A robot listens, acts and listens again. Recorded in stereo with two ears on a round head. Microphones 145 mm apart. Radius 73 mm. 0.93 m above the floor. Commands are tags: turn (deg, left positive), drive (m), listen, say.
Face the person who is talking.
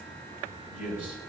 <turn deg="-30"/>
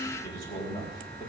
<turn deg="20"/>
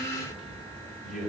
<say>Facing the man speaking.</say>